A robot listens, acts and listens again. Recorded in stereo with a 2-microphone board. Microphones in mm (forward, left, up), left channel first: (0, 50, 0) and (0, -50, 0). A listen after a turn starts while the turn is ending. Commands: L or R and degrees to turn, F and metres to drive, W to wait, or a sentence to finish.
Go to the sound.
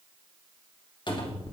L50
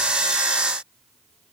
W
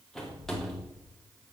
F1.0
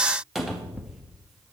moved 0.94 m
F1.0
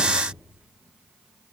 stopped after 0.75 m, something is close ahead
R10
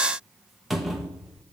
I am next to the cupboard door.